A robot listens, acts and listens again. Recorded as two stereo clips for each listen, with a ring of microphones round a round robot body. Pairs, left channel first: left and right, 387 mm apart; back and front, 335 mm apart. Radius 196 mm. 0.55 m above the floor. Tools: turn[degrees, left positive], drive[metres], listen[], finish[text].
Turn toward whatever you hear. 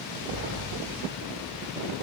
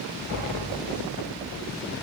Thought: The sliding door: 35° right.
Action: turn[-35]
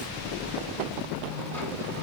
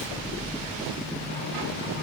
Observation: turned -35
Action: finish[Facing the sliding door, 2 to 4 m away.]